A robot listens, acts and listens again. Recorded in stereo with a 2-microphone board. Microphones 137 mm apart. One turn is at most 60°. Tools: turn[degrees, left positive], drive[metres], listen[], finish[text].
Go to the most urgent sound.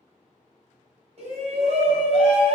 Thought: The shout: about 50° right or 130° right.
Action: turn[-50]
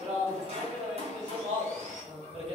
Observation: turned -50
Thought: So it is at 60° right.
Action: turn[-60]
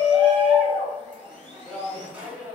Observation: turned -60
Thought: The shout is now 10° right.
Action: turn[-10]
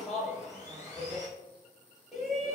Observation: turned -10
Action: drive[1.0]
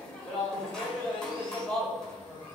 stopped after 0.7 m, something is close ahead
Thought: The shout is now 10° left.
Action: turn[10]
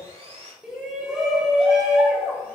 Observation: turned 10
Action: finish[I am next to the shout.]